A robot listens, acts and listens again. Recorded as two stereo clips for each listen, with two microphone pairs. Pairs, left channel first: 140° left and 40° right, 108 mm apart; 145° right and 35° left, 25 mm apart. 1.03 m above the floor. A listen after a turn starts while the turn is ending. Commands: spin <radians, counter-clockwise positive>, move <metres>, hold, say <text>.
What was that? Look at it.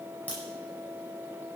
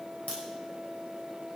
spin -2.44
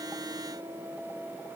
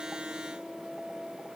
say Facing where the crack came from. I can't hear it now.